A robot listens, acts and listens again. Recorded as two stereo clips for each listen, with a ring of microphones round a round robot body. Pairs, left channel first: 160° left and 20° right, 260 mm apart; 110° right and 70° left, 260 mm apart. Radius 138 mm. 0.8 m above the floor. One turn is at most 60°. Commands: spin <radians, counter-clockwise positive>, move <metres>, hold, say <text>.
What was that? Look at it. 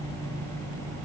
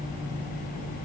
hold
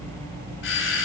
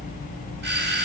spin 1.05
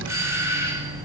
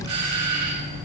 spin 1.05
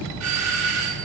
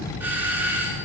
spin -0.26
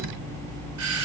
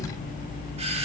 say Facing the doorbell.